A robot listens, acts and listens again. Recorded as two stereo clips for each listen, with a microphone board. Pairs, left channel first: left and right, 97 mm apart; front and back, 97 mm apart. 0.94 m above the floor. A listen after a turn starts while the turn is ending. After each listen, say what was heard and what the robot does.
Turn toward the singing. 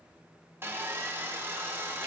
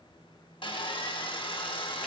Keep listening.
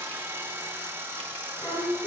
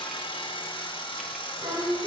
The singing: 150° left. Turn 150° left.
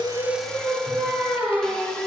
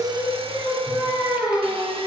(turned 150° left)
The singing is now 10° right. Turn 10° right.
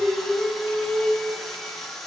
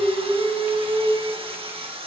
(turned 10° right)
Facing the singing.